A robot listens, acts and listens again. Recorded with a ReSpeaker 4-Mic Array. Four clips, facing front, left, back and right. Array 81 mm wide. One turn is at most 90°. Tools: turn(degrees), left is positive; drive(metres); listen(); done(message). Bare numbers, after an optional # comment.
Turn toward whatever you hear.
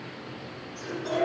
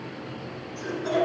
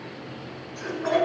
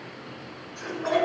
# The laughter: 145° right.
turn(-90)
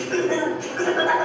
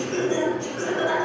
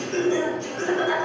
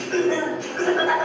# The laughter is now 35° right.
turn(-35)
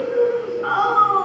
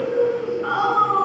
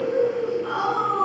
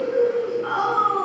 # The laughter is now 10° left.
turn(10)
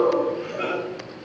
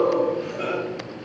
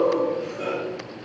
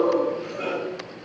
done("Found it: laughter, straight ahead, 2 to 4 m away.")